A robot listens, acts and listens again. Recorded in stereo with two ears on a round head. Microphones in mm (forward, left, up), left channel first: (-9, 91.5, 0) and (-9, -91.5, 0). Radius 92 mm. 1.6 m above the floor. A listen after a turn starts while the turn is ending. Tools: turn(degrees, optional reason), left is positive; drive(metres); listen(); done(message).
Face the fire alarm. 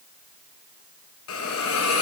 listen()
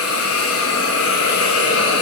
listen()
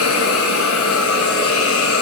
done("I can't make out a fire alarm to turn to.")